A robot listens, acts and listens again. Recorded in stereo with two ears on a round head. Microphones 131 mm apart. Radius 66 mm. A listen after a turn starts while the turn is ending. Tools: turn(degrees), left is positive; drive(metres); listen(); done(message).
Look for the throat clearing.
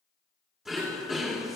turn(degrees=-30)
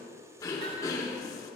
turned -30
turn(degrees=25)
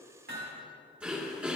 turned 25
turn(degrees=-10)
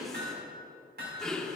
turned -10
done("Facing the throat clearing.")